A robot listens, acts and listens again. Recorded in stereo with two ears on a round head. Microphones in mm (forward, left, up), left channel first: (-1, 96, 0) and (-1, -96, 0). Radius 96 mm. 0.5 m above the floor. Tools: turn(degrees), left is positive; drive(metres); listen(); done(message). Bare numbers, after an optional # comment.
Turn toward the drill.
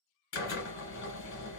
# The drill: about 65° left or 115° left.
turn(65)
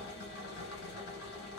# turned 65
# So it is at 55° left.
turn(55)
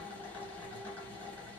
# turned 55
# The drill is now 10° left.
turn(10)
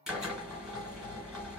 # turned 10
done("Found it: a drill, straight ahead.")